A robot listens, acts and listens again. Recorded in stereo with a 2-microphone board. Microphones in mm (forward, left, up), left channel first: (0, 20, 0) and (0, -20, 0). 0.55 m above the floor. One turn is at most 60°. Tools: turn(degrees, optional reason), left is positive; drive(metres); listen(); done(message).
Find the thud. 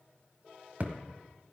turn(degrees=-45, reason="The thud: about 45° right or 135° right.")
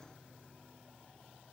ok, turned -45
listen()
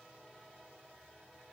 done("I heard a thud, but can't make it out now. It was about straight ahead or 90° right.")